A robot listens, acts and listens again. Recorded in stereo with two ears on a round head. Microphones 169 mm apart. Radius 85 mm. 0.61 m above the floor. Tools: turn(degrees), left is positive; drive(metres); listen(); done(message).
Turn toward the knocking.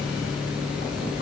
listen()
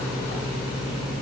listen()
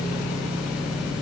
done("I can't make out knocking to turn to.")